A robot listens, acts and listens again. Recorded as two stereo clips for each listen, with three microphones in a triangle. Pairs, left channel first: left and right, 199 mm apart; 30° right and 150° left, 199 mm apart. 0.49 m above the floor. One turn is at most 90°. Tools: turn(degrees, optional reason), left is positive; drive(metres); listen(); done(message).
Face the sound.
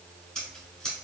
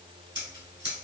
turn(degrees=90, reason="The scissors: 175° left.")
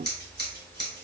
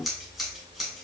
turn(degrees=60, reason="The scissors is now 60° left.")
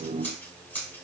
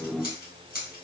turn(degrees=10, reason="The scissors is now 10° left.")
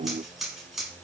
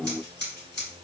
done("Found it: scissors, straight ahead.")